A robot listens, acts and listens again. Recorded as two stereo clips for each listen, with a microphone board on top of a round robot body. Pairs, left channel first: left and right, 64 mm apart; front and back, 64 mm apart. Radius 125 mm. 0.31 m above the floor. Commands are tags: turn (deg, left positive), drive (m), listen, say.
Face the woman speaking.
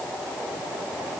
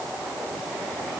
<listen/>
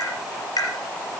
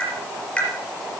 <listen/>
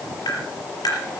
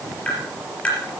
<say>I can't make out a woman speaking, only tapping.</say>